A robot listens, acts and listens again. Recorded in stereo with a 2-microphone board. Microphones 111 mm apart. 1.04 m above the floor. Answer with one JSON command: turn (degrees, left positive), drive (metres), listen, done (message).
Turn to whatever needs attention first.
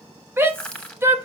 {"turn": -20}
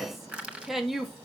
{"done": "Facing the shout."}